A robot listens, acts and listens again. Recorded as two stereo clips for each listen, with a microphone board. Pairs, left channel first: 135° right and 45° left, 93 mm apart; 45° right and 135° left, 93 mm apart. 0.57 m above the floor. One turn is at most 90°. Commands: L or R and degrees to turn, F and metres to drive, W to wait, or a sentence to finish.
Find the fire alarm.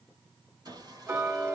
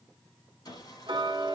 W
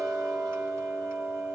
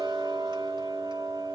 W
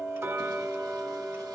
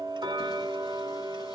I can't make out a fire alarm to turn to.